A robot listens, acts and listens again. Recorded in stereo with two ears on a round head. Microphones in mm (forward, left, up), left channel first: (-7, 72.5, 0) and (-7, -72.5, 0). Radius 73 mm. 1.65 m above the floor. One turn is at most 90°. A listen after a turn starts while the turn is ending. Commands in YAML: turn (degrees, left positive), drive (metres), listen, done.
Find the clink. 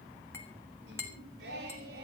turn: 15
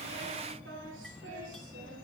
listen: true
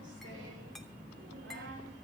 listen: true
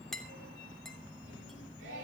done: "Found it: a clink, straight ahead, 2 to 4 m away."